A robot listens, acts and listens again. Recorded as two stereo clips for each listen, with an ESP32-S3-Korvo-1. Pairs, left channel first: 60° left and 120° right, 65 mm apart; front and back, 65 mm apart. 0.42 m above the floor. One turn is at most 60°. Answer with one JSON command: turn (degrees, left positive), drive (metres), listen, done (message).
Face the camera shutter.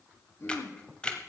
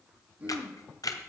{"turn": -15}
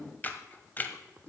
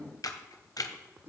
{"done": "Found it: a camera shutter, straight ahead."}